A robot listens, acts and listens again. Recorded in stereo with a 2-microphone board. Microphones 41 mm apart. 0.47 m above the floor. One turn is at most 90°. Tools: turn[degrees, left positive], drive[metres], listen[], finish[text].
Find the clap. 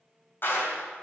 Thought: The clap: about 55° left or 125° left.
Action: turn[55]
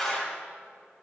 Thought: So it is at 10° left.
Action: turn[10]
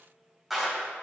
Action: finish[Facing the clap.]